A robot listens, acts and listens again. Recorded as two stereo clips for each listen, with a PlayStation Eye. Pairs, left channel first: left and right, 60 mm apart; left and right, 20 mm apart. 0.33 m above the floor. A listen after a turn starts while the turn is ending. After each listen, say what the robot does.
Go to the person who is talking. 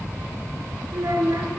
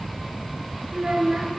Turn 90° right.
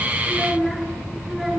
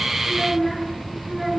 Drive 1.0 m forward.
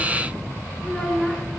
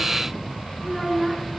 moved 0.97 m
Turn 10° left.
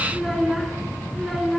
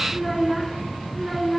Drive 1.0 m forward.
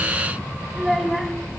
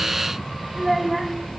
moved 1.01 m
Drive 1.0 m forward.
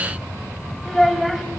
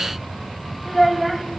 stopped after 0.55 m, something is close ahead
Arrived at the child speaking, straight ahead.